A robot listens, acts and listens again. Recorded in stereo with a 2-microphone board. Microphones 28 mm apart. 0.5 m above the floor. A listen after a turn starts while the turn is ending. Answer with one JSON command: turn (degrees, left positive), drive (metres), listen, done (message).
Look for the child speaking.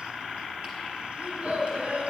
{"turn": -50}
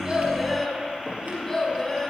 {"turn": 15}
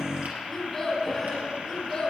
{"turn": 15}
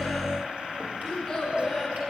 {"turn": 10}
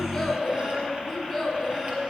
{"done": "Facing the child speaking."}